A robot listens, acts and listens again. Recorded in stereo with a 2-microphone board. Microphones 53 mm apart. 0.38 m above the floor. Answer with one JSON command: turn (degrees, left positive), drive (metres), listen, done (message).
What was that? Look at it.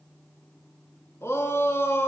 {"turn": 65}
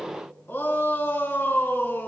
{"turn": 50}
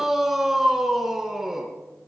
{"done": "Found it: a shout, straight ahead."}